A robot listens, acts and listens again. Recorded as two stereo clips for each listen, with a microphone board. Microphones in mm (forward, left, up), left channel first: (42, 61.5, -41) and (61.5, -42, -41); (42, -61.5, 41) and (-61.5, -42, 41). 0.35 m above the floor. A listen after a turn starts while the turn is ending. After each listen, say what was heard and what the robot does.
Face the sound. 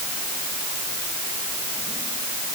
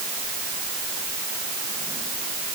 Keep listening.
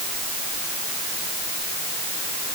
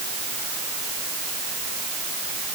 Keep listening.
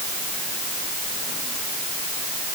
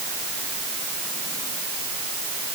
I can't make out anything.